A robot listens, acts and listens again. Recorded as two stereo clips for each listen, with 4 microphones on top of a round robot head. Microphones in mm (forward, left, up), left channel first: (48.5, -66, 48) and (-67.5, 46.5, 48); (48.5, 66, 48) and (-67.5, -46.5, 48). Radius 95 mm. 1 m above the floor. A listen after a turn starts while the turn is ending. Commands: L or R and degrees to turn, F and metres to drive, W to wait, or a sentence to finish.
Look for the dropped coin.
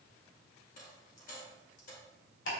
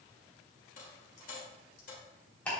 Facing the dropped coin.